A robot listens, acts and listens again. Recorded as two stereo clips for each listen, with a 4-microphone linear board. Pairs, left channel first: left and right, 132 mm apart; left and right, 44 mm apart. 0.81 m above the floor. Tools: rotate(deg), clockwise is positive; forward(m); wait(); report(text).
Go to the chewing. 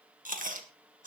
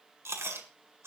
rotate(75)
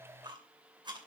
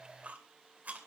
rotate(35)
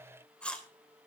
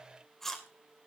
rotate(-10)
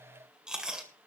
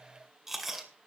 forward(1.0)
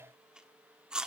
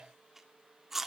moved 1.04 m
forward(1.0)
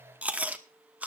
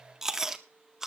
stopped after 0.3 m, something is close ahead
rotate(10)
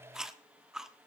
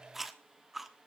report("Arrived at the chewing, straight ahead.")